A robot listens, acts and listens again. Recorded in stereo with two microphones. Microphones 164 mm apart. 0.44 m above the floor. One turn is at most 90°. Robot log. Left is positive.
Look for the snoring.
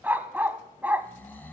cmd yaw +30
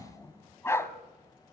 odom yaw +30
note: So it is at 15° right.
cmd yaw -15
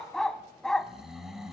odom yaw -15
end: Found it: snoring, straight ahead.